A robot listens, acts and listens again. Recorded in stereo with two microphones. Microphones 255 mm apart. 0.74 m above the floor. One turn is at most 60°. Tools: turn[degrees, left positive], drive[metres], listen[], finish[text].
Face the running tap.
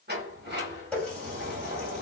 Action: turn[30]
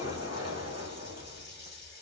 Action: listen[]
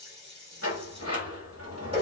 Thought: So it is at 25° right.
Action: turn[-25]
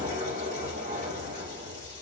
Action: listen[]
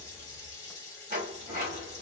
Thought: The running tap is now 15° left.
Action: turn[15]
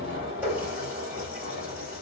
Thought: The running tap is now 10° right.
Action: turn[-10]
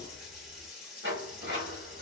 Action: finish[Facing the running tap.]